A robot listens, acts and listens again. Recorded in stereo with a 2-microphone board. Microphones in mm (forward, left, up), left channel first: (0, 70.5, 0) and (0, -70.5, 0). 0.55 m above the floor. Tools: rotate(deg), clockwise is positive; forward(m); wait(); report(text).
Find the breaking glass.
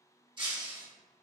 rotate(35)
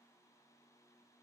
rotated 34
wait()
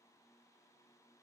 report("I heard breaking glass, but can't make it out now. It was about straight ahead or 110° right.")